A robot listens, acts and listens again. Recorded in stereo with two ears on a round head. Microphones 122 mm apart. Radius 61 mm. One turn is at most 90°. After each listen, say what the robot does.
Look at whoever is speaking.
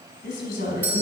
Turn 70° left.
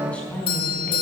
Turn 10° left.
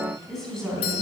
Found it: a woman speaking, straight ahead.